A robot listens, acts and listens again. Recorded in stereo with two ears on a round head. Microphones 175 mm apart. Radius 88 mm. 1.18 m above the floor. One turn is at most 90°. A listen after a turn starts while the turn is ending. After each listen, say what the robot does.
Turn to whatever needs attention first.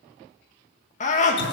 Turn 40° left.
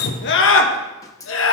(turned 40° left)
Turn 90° left.
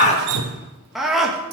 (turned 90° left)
Found it: a scream, straight ahead, 1 to 2 m away.